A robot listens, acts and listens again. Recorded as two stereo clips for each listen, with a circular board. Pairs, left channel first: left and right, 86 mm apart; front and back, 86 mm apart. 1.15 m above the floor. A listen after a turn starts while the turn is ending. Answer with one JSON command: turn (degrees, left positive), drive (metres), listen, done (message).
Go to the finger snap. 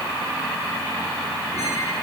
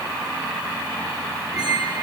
{"listen": true}
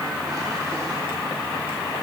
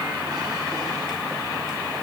{"listen": true}
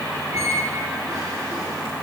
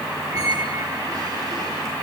{"done": "I can't make out a finger snap to turn to."}